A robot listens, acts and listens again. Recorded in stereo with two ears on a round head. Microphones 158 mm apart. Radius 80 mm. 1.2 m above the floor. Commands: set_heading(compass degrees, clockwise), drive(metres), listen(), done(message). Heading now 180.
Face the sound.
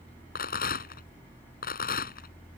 set_heading(125)
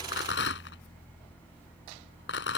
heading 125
set_heading(55)
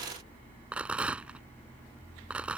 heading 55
done("Facing the rattle.")